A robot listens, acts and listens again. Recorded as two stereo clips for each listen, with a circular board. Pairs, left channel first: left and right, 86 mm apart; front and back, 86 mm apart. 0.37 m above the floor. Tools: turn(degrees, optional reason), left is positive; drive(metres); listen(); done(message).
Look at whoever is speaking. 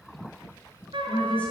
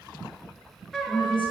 turn(degrees=15, reason="The woman speaking: 15° left.")
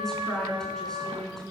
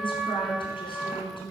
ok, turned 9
done("Found it: a woman speaking, straight ahead, over 4 m away.")